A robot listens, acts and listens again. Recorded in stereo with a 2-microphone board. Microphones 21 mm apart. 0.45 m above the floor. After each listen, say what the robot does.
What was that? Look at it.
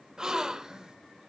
Turn 30° right.
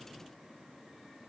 Keep listening.
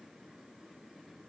I heard a gasp, but can't make it out now. It was about straight ahead or 120° right.